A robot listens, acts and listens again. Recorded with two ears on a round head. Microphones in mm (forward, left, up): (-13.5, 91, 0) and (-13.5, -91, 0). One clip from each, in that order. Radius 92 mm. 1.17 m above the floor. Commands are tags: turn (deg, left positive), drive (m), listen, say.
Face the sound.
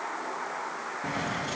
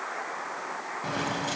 <turn deg="-40"/>
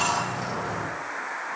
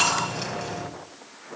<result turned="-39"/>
<turn deg="-100"/>
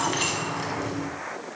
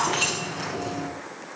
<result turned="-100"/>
<say>Facing the keys jangling, over 4 m away.</say>